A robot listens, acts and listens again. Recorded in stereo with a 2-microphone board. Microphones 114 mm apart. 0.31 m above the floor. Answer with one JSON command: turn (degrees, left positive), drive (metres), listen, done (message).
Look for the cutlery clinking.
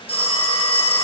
{"listen": true}
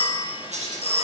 {"turn": -90}
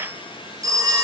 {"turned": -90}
{"listen": true}
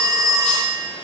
{"listen": true}
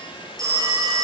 {"done": "I heard cutlery clinking from this way, but can't make it out now."}